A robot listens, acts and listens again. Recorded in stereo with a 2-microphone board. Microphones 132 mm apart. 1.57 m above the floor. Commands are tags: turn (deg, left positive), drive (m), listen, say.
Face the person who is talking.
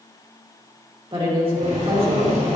<turn deg="-40"/>
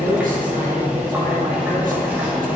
<listen/>
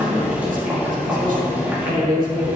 <turn deg="-100"/>
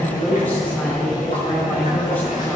<turn deg="15"/>
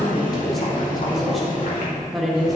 <say>Facing the woman speaking.</say>